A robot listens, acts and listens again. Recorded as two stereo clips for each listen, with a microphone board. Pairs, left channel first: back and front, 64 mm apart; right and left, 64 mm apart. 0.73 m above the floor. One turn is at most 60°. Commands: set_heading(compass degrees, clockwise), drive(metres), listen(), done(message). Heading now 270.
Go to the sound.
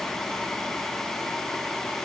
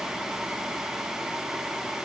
listen()
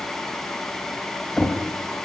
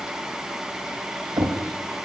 set_heading(210)
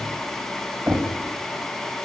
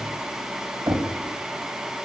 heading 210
set_heading(155)
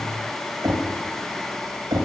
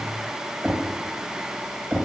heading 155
set_heading(145)
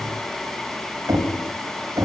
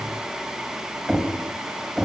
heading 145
drive(1.0)
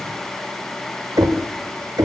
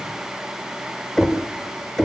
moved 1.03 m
drive(1.0)
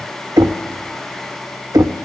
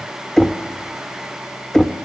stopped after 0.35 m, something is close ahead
set_heading(155)
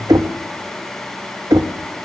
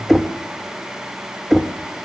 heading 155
done("I am next to the knocking.")